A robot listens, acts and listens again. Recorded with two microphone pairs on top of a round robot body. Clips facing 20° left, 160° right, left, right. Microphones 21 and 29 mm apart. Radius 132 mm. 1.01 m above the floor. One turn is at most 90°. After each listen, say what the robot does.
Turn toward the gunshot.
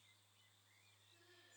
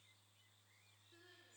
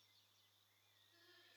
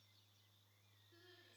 Keep listening.
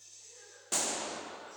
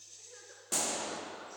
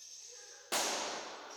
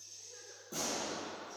Turn 90° left.
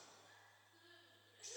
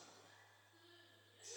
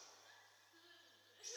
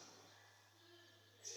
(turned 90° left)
Turn 10° left.
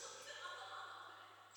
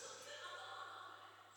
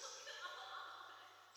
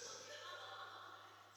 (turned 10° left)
I heard a gunshot from this way, but can't make it out now.